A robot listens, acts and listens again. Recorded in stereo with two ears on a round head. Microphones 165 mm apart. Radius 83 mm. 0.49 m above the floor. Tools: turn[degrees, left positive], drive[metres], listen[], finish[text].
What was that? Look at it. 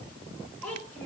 Action: turn[30]
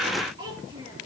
Thought: So it is at 25° right.
Action: turn[-25]
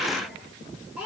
Action: finish[Found it: a child speaking, straight ahead.]